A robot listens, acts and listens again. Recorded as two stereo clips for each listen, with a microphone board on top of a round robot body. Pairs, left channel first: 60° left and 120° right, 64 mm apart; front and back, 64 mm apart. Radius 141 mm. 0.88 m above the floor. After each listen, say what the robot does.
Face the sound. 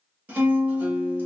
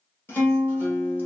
Turn 60° right.
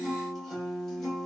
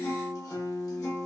Turn 20° right.
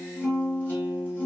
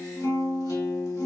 Found it: a guitar, straight ahead, 1 to 2 m away.